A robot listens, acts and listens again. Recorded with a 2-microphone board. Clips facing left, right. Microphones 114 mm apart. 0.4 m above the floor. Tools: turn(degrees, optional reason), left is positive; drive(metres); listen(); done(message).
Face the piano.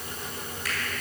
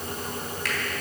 listen()
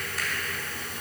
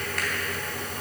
listen()
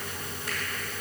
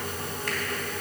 done("I can't make out a piano, only a finger snap.")